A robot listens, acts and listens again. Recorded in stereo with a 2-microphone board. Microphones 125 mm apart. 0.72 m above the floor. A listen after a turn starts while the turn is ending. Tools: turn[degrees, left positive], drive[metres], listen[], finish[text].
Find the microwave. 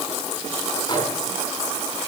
Action: listen[]
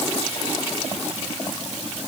Action: listen[]
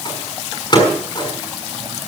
Thought: The microwave: about 35° left or 145° left.
Action: turn[35]
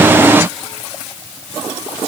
Action: listen[]
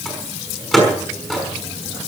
Action: finish[Facing the microwave, over 4 m away.]